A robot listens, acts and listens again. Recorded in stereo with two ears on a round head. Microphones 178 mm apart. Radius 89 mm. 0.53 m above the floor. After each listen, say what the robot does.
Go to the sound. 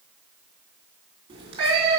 Turn 30° right.
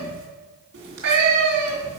Turn 120° right.
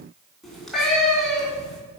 Drive 1.0 m forward.
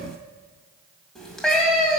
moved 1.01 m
Drive 1.0 m forward.
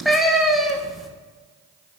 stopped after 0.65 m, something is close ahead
I am next to the cat meowing.